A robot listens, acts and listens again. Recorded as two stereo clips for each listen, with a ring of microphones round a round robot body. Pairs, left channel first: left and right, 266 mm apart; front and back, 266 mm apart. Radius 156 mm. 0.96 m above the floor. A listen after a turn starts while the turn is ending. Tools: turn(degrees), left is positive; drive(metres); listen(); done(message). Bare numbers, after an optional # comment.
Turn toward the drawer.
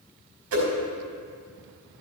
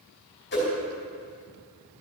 listen()
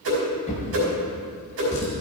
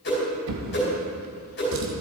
# The drawer: 160° left.
turn(160)
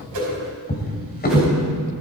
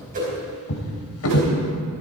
# The drawer is now 35° left.
turn(35)
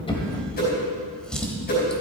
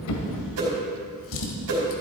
done("Facing the drawer.")